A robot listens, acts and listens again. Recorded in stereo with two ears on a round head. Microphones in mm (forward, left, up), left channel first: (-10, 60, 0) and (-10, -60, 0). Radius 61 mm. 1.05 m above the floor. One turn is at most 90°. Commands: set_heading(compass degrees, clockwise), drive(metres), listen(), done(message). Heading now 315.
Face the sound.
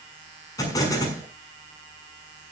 set_heading(285)
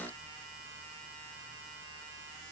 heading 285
listen()
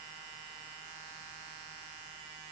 done("I heard an explosion, but can't make it out now. It was about straight ahead or 120° left.")